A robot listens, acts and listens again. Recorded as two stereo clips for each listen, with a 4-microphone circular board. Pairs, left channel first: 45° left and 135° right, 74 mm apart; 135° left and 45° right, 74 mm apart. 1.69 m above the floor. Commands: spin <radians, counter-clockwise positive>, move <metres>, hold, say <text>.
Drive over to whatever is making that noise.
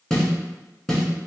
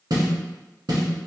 spin -0.61
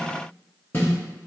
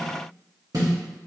spin -0.17
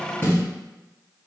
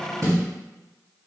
move 1.0
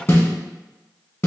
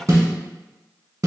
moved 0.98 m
move 1.0
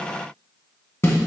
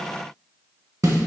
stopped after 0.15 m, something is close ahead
say I am next to the snare drum.